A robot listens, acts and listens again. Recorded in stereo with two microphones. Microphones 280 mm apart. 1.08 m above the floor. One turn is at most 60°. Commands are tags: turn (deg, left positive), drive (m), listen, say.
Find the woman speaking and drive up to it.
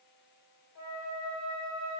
<listen/>
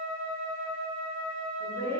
<turn deg="40"/>
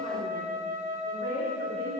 <turn deg="60"/>
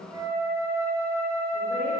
<turn deg="35"/>
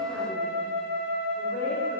<listen/>
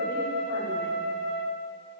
<say>Facing where the woman speaking came from. I can't hear it now. I did not reach it.</say>